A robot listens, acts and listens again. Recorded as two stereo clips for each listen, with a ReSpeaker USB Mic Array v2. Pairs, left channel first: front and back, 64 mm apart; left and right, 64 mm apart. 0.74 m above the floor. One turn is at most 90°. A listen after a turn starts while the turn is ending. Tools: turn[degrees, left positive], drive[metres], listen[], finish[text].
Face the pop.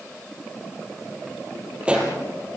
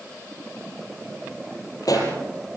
Thought: The pop: 110° left.
Action: turn[90]
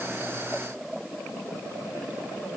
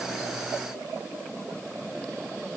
Thought: Nothing new. It was at 20° left.
Action: turn[20]
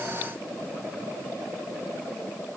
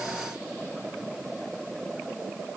Action: finish[I heard a pop from this way, but can't make it out now.]